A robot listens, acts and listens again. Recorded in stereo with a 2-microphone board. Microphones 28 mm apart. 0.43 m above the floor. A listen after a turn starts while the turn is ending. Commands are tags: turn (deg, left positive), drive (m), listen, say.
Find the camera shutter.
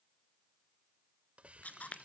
<turn deg="65"/>
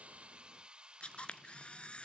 <turn deg="45"/>
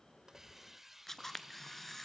<turn deg="15"/>
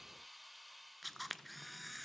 <say>Found it: a camera shutter, straight ahead.</say>